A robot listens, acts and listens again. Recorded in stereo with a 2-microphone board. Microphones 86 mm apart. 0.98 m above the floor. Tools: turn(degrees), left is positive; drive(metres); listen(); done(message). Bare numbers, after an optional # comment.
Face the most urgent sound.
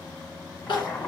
# The crying: about 65° left or 115° left.
turn(65)
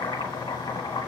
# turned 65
listen()
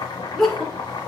done("Found it: crying, straight ahead, 2 to 4 m away.")